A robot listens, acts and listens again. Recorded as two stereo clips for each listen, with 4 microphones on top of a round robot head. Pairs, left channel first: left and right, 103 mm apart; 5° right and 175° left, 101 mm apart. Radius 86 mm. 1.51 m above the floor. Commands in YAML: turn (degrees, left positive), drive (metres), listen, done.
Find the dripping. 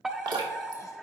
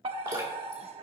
turn: -130
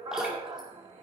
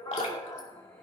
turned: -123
done: "Found it: dripping, straight ahead."